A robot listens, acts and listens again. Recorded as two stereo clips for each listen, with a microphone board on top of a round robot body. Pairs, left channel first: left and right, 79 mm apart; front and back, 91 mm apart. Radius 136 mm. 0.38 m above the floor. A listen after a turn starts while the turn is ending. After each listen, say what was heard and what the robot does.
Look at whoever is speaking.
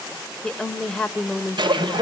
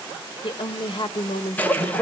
Found it: a woman speaking, straight ahead.